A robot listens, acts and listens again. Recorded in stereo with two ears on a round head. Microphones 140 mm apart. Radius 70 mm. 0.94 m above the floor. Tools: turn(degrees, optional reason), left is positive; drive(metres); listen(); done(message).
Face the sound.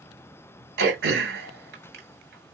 turn(degrees=-90)
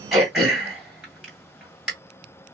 done("Found it: throat clearing, straight ahead.")